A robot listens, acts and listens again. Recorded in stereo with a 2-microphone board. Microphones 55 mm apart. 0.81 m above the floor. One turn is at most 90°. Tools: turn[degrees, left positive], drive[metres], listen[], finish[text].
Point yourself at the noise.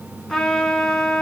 Action: turn[30]
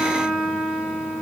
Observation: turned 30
Thought: So it is at 20° right.
Action: turn[-20]
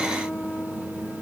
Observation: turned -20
Action: finish[Facing the trumpet.]